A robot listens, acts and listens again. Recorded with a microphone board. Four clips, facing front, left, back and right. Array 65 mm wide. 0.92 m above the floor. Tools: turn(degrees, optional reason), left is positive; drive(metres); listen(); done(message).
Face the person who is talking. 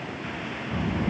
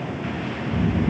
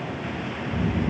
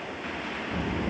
turn(degrees=-25, reason="The child speaking: 25° right.")
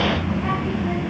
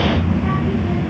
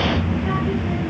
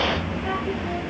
turn(degrees=20, reason="The child speaking is now 20° left.")
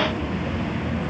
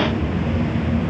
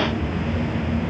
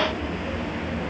done("Facing the child speaking.")